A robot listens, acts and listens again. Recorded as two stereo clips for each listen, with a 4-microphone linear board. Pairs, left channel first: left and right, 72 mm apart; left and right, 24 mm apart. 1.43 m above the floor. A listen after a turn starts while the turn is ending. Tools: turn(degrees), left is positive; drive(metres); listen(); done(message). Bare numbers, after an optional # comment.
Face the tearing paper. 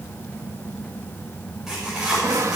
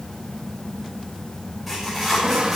turn(-30)
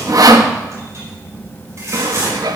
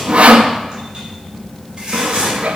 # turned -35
# So it is at 135° right.
turn(-135)
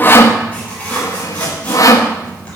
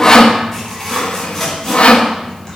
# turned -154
# The tearing paper is now 15° left.
turn(15)
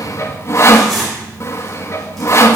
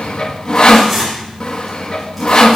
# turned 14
done("Found it: tearing paper, straight ahead, over 4 m away.")